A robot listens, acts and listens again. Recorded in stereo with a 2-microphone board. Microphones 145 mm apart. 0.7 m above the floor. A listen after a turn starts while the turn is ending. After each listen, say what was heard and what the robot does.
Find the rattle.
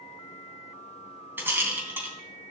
Turn 30° right.
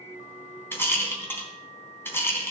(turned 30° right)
So it is at 15° left. Turn 15° left.
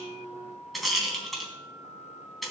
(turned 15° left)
Facing the rattle, 2 to 4 m away.